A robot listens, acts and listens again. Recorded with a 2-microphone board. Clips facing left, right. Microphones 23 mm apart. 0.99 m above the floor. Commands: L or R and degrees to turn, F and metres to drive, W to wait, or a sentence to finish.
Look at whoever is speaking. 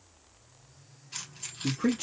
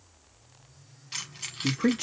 R25
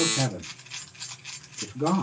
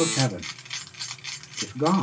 R125
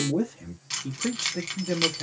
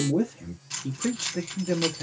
Facing the man speaking.